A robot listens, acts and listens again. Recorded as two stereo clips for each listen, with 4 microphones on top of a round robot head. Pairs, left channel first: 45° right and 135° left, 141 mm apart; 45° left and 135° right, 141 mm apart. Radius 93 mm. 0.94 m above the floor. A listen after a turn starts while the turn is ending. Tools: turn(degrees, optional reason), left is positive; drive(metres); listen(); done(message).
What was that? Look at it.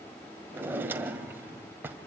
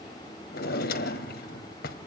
turn(degrees=60, reason="The drawer: 60° left.")
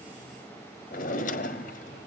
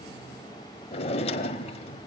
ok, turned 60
done("Found it: a drawer, straight ahead.")